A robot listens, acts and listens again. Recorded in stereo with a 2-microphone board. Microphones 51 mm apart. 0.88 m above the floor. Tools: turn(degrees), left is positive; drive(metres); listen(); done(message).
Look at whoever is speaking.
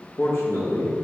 turn(degrees=65)
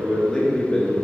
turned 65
turn(degrees=15)
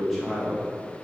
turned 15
done("Found it: a man speaking, straight ahead, 1 to 2 m away.")